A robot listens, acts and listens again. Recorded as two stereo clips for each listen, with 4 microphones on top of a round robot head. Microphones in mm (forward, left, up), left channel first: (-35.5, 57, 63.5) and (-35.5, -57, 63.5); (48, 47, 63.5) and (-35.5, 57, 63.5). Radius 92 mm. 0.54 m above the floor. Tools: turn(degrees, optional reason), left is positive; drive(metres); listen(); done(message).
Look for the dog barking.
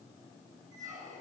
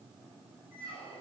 listen()
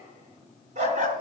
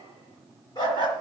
turn(degrees=-55, reason="The dog barking: 55° right.")
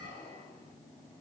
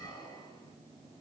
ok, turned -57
listen()
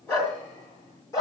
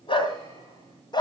turn(degrees=25, reason="The dog barking is now 25° left.")
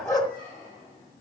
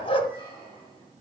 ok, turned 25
done("Facing the dog barking.")